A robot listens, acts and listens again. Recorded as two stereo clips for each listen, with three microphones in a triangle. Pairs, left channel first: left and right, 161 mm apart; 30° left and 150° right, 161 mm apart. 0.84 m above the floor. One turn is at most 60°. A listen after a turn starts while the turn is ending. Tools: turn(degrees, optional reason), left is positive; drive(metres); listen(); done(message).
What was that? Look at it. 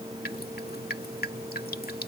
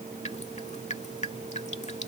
turn(degrees=60, reason="The dripping: 75° left.")
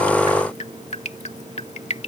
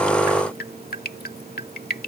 turn(degrees=45, reason="The dripping is now 45° left.")
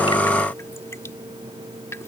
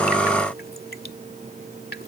turn(degrees=15, reason="The dripping is now 15° left.")
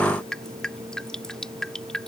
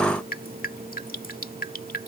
done("Found it: dripping, straight ahead.")